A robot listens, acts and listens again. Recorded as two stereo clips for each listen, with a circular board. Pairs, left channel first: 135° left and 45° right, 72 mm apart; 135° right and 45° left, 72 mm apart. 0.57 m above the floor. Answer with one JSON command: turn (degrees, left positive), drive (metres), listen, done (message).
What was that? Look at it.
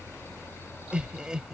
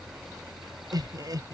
{"turn": 35}
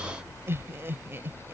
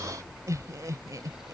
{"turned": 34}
{"turn": 15}
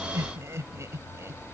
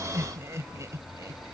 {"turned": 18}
{"done": "Facing the laughter."}